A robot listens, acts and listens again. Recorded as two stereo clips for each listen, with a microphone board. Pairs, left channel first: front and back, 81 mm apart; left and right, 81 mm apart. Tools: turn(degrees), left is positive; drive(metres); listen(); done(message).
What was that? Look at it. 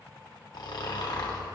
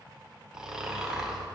turn(degrees=-10)
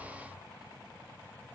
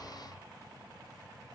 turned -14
listen()
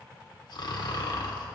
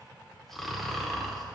done("Facing the snoring.")